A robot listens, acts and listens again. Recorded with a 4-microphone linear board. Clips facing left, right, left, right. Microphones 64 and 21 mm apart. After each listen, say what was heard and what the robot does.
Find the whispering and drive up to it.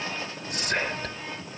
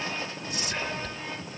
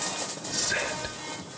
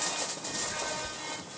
The whispering: about 60° left or 120° left. Turn 60° left.
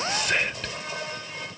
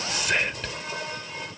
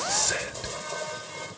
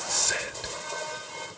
Drive 1.0 m forward.
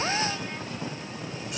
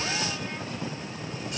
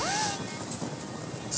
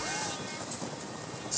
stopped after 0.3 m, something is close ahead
Keep listening.
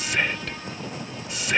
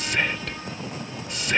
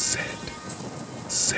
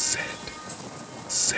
Blocked. The whispering is further on, straight ahead.